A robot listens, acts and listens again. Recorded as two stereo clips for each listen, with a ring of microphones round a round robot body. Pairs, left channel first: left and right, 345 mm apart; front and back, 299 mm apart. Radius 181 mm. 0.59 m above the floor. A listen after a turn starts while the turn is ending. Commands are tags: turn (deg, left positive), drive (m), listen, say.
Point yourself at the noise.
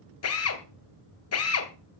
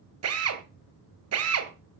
<turn deg="140"/>
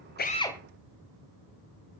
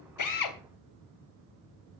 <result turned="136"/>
<listen/>
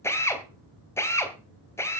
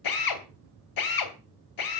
<say>Found it: a drill, straight ahead.</say>